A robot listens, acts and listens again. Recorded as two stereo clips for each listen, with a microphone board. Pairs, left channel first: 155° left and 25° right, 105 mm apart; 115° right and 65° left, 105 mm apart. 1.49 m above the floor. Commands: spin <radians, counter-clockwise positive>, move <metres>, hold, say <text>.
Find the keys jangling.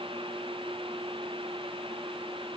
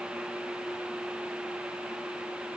hold
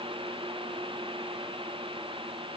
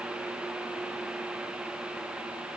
hold
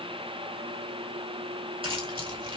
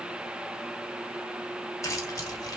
spin -0.96
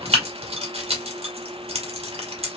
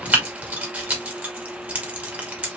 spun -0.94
say Facing the keys jangling, 1 to 2 m away.